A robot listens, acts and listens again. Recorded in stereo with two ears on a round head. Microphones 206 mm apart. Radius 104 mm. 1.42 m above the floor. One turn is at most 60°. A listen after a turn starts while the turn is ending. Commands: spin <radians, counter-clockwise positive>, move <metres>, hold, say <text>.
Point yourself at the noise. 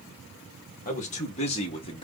spin 0.35
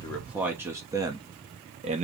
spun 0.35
spin -0.52
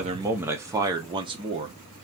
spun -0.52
spin -0.44
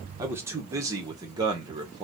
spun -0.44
spin -0.26
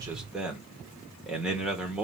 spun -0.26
say Facing the man speaking, 1 to 2 m away.